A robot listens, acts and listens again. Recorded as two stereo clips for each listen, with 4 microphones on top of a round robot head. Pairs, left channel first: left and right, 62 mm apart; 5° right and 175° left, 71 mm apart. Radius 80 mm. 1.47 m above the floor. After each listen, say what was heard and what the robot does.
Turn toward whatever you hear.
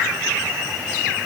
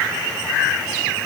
Keep listening.
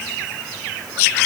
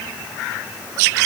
Keep listening.
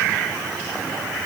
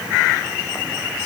I can't make out anything.